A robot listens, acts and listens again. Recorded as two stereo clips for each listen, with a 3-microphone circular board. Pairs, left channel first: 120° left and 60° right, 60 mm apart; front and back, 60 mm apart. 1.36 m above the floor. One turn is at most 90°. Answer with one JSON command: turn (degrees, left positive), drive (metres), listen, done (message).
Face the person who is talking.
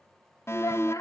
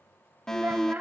{"turn": 90}
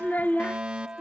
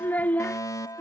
{"turn": 65}
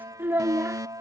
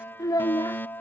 {"done": "Found it: a child speaking, straight ahead."}